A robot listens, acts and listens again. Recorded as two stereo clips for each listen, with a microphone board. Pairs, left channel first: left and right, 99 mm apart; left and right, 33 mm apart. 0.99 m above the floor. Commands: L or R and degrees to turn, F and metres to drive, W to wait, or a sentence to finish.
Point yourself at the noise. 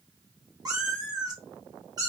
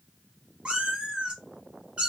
R40
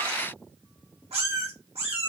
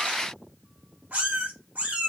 R100
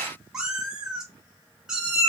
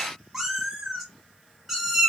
Found it: a cat meowing, straight ahead, 1 to 2 m away.